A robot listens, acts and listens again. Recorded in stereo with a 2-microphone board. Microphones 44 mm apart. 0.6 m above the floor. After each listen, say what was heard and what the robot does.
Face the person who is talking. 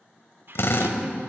The woman speaking: about 60° right or 120° right. Turn 60° right.
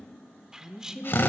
So it is at 15° right. Turn 15° right.
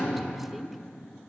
Keep listening.
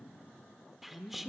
Facing the woman speaking.